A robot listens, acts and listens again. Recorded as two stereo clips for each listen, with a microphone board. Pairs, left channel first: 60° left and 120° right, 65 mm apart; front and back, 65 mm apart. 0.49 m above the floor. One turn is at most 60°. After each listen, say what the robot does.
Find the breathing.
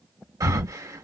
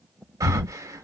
Turn 60° right.
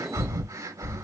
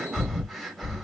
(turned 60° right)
Turn 60° right.
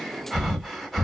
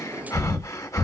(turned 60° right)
Turn 35° right.
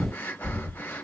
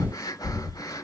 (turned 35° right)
Facing the breathing, 1 to 2 m away.